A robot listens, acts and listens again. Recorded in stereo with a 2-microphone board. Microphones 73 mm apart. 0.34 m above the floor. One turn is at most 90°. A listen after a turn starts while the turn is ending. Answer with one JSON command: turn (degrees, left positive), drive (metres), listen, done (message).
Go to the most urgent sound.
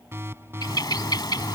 {"turn": -35}
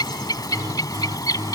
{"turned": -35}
{"turn": -90}
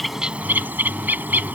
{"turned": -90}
{"turn": -15}
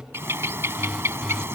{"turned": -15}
{"drive": 1.0}
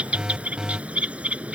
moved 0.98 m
{"turn": -15}
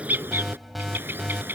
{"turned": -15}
{"drive": 1.0}
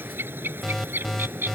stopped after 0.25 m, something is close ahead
{"done": "I am next to the alarm."}